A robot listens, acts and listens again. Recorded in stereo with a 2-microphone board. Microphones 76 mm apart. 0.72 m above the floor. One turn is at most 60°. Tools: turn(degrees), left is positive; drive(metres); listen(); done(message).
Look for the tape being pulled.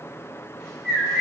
listen()
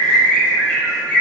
listen()
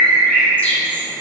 done("I can't make out tape being pulled to turn to.")